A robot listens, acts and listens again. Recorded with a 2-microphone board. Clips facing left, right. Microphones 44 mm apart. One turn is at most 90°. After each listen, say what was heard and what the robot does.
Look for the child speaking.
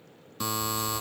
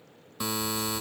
The child speaking: about 55° left or 125° left. Turn 55° left.
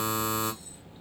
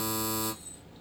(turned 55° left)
So it is at 20° left. Turn 20° left.
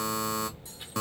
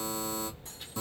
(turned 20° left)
The child speaking is now 15° left. Turn 15° left.
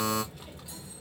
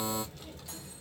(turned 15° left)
The child speaking is now 25° left. Turn 25° left.
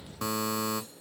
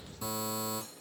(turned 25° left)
The child speaking is now 20° left. Turn 20° left.
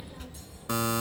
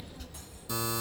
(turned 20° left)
The child speaking is now 30° left. Turn 30° left.
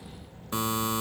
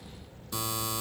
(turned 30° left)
The child speaking is now 15° left. Turn 15° left.
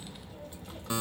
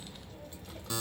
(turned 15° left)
Found it: a child speaking, straight ahead, 1 to 2 m away.